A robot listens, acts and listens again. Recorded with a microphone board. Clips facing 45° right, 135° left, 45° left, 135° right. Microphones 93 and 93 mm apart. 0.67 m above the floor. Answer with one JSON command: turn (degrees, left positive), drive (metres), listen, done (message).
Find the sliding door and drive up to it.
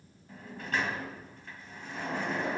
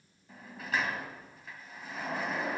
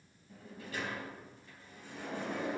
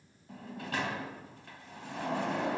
{"turn": -140}
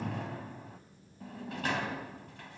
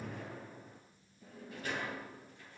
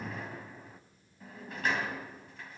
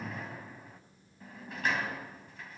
{"turn": -45}
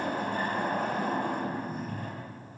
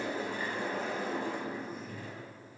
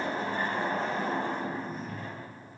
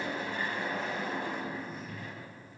{"turn": -10}
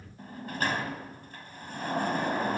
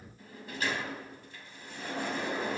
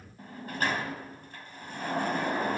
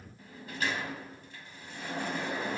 {"drive": 1.0}
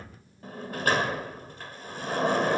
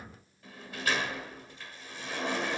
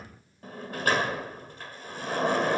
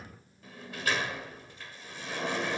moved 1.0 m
{"drive": 1.0}
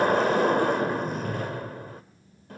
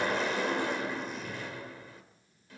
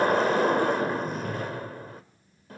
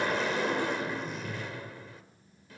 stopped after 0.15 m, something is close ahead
{"done": "Arrived at the sliding door, straight ahead."}